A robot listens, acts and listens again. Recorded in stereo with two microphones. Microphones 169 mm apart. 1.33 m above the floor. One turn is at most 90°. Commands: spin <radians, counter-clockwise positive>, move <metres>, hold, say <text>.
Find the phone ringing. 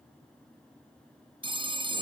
spin -0.52
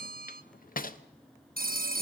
spin -1.57
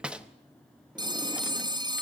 spin -0.44
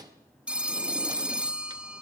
say Facing the phone ringing.